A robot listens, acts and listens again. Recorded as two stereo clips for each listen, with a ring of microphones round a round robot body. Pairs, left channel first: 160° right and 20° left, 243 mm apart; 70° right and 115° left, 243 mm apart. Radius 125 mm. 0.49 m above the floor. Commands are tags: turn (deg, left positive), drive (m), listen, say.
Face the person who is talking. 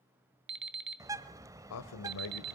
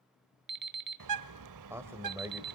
<turn deg="-170"/>
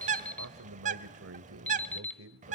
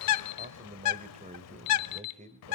<turn deg="50"/>
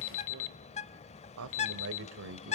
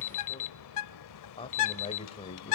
<say>Facing the man speaking, 1 to 2 m away.</say>